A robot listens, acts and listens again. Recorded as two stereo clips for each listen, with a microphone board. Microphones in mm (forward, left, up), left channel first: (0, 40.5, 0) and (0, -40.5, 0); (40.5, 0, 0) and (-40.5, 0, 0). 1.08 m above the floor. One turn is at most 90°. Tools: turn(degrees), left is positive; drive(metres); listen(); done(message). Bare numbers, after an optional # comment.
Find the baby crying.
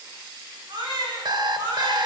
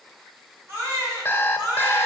# The baby crying: 120° right.
turn(-90)
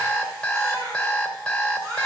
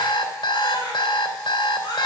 # The baby crying is now 40° right.
turn(-40)
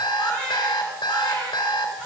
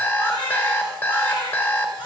# The baby crying is now 10° left.
turn(10)
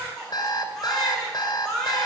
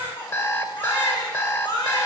done("Found it: a baby crying, straight ahead.")